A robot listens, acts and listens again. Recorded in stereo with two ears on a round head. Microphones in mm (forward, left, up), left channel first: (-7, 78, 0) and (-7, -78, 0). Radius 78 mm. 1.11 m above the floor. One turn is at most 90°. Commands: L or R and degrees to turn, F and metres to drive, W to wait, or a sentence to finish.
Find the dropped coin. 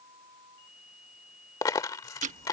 L20
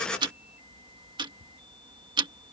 W
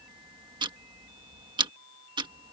I heard a dropped coin, but can't make it out now. It was about straight ahead or 140° left.